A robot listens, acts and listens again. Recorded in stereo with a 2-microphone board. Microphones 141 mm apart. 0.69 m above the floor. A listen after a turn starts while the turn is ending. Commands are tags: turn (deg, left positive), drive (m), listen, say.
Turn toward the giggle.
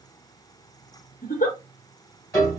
<turn deg="60"/>
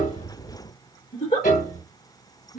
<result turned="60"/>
<turn deg="55"/>
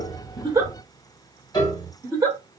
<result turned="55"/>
<turn deg="-15"/>
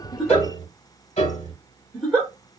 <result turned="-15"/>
<say>Facing the giggle, 1 to 2 m away.</say>